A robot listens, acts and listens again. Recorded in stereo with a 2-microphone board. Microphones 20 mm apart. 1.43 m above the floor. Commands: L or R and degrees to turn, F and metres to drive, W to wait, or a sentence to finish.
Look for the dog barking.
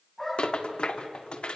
L30
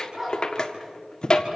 R15
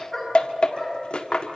Facing the dog barking, over 4 m away.